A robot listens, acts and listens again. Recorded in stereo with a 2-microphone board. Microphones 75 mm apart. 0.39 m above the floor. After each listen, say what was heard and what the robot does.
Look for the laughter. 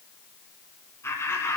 The laughter: about 35° left or 145° left. Turn 35° left.
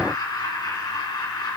So it is at 105° left. Turn 105° left.
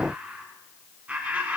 The laughter is now 20° right. Turn 20° right.
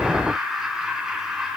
Found it: laughter, straight ahead, 2 to 4 m away.